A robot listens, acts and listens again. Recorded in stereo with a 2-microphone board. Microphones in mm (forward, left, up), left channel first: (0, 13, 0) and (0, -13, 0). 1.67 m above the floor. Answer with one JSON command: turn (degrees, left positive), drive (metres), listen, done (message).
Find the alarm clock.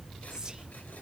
{"listen": true}
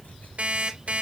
{"turn": -55}
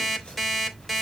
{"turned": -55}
{"done": "Found it: an alarm clock, straight ahead, 2 to 4 m away."}